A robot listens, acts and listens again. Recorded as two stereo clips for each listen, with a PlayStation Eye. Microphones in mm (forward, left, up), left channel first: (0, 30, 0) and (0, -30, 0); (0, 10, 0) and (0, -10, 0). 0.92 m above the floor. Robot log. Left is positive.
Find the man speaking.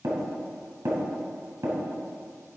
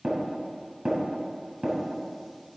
cmd idle
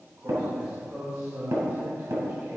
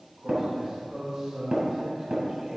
note: The man speaking: about 50° right or 130° right.
cmd yaw -50
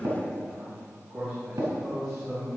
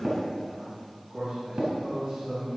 end: Found it: a man speaking, straight ahead, over 4 m away.